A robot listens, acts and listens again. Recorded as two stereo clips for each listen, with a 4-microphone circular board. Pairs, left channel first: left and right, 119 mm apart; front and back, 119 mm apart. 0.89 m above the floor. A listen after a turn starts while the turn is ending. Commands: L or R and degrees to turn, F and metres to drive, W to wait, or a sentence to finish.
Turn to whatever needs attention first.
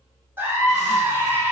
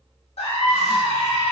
R20
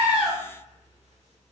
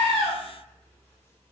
W
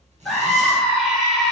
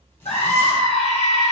Facing the scream.